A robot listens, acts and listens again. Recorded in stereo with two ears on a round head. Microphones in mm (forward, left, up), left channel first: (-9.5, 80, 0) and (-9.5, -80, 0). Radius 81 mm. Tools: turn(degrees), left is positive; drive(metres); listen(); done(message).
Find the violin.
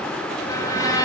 turn(degrees=20)
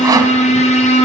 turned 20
turn(degrees=140)
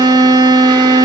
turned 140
turn(degrees=-20)
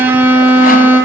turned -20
turn(degrees=-10)
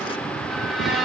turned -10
done("Found it: a violin, straight ahead.")